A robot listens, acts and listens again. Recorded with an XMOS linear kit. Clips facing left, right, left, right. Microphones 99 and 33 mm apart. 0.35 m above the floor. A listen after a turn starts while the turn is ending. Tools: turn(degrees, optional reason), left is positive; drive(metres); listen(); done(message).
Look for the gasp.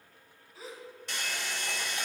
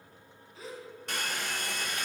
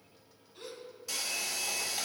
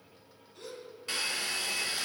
turn(degrees=30)
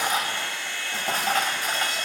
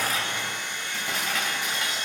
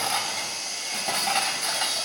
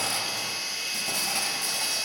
listen()
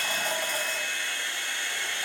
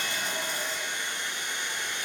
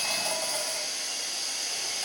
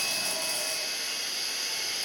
done("I heard a gasp, but can't make it out now. It was about 25° right or 145° left.")